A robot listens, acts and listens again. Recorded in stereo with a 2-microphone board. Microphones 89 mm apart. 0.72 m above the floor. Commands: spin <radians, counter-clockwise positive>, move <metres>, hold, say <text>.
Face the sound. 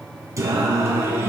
spin -0.44
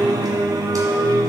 spin -0.61
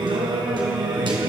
spin -2.09
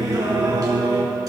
spin -0.79
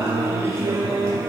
spin -0.61
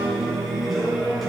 say Facing the singing.